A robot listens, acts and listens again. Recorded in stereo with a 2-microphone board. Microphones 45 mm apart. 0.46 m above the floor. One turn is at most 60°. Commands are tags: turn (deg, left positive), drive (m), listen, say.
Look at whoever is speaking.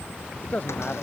<turn deg="35"/>
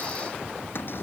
<listen/>
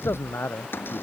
<turn deg="60"/>
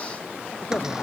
<turn deg="50"/>
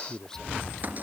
<turn deg="10"/>
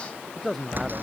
<say>Found it: a man speaking, straight ahead.</say>